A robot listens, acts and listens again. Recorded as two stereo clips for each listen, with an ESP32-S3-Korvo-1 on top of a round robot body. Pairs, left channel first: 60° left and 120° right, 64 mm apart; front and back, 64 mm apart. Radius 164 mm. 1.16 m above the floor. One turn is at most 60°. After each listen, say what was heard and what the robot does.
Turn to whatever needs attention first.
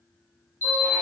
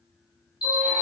Found it: an alarm, straight ahead, 1 to 2 m away.